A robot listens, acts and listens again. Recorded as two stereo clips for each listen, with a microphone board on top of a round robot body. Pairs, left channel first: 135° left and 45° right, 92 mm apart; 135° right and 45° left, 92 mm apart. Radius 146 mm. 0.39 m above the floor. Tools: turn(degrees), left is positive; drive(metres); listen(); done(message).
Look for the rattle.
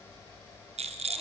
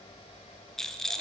turn(degrees=-50)
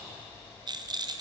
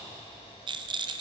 done("Found it: a rattle, straight ahead.")